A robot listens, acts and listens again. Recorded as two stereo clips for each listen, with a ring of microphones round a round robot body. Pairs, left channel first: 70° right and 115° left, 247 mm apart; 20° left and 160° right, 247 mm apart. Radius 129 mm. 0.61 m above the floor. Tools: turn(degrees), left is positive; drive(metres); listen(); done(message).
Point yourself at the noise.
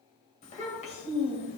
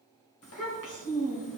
done("Facing the child speaking.")